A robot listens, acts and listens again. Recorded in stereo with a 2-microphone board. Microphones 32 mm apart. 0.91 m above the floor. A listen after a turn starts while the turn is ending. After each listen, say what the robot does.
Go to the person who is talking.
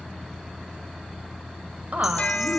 Turn 50° right.
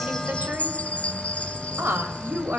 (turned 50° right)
Turn 75° right.
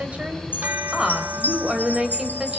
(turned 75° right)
Turn 15° right.
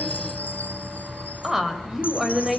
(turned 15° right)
Turn 10° right.
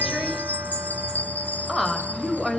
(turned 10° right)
Drive 1.0 m forward.
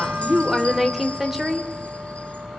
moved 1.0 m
Drive 1.0 m forward.
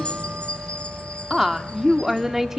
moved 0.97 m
Turn 10° right.
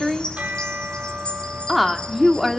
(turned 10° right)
Drive 1.0 m forward.
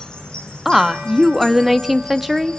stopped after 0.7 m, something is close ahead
I am next to the woman speaking.